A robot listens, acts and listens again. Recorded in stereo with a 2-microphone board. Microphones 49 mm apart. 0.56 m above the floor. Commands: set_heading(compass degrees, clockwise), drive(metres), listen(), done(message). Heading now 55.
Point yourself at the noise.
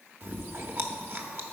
set_heading(105)
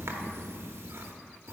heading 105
set_heading(180)
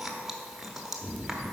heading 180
set_heading(190)
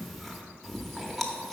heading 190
done("Found it: chewing, straight ahead, under 1 m away.")